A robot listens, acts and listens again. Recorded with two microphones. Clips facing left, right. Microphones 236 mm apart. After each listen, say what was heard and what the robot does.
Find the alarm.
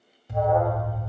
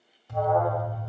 The alarm: about 20° left or 160° left. Turn 20° left.
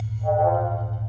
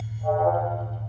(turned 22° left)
Facing the alarm.